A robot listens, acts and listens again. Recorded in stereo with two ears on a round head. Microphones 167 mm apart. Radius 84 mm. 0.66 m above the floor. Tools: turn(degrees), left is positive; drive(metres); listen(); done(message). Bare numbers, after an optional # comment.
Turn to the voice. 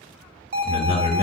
# The man speaking: about 50° left or 130° left.
turn(50)
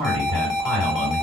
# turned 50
done("Found it: a man speaking, straight ahead, 2 to 4 m away.")